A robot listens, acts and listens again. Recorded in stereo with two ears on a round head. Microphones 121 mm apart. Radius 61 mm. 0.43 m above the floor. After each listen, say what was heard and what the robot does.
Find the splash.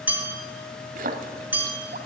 The splash: about 65° right or 115° right. Turn 65° right.
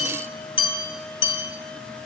Keep listening.
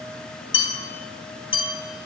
I heard a splash, but can't make it out now. It was about straight ahead or 50° right.